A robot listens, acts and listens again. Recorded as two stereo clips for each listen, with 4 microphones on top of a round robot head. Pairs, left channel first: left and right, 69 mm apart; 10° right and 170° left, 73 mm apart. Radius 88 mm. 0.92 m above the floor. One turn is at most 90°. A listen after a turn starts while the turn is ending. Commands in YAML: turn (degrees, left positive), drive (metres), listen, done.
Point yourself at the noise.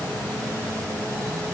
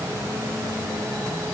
listen: true
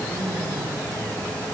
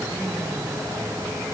listen: true
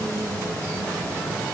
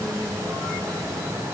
done: "I can't make out anything to turn to."